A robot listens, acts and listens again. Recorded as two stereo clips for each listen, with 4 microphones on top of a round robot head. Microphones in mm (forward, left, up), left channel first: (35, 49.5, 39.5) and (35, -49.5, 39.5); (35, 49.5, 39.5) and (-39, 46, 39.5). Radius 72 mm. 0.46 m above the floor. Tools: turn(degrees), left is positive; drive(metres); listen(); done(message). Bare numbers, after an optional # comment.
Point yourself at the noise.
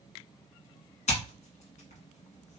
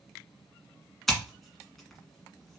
# The scissors: 90° left.
turn(90)
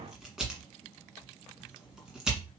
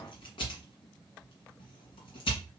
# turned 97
done("Found it: scissors, straight ahead, 1 to 2 m away.")